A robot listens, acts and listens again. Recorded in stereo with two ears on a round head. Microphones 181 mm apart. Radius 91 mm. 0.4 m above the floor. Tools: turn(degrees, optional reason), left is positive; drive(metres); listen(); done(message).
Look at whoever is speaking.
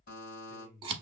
turn(degrees=60, reason="The man speaking: about 60° left or 120° left.")
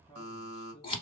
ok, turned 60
turn(degrees=30, reason="So it is at 30° left.")
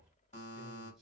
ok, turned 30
listen()
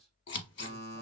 listen()
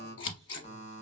done("I heard a man speaking from this way, but can't make it out now.")